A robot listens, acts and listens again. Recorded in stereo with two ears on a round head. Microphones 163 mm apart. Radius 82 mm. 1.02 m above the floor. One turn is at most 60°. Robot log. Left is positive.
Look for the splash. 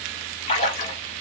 note: The splash: about 40° left or 140° left.
cmd yaw +40
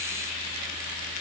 cmd idle
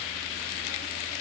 end: I heard a splash, but can't make it out now. It was about straight ahead or 100° left.